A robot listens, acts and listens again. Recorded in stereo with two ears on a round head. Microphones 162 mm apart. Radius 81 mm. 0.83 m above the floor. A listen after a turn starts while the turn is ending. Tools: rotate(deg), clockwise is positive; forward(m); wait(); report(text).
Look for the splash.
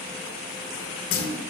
rotate(-50)
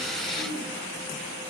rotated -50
wait()
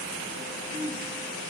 report("I heard a splash, but can't make it out now. It was about straight ahead or 80° left.")